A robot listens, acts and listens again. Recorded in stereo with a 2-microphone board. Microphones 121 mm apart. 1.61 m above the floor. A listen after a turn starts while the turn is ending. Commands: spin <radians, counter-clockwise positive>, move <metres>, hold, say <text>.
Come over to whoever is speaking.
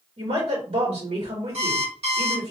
spin -0.96
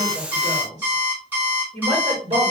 spin -1.22
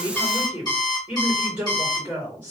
spin -0.35
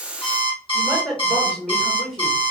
move 1.0
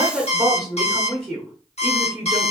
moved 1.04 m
spin -0.17
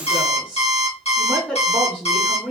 move 1.0
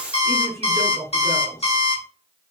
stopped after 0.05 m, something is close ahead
say I am next to the woman speaking.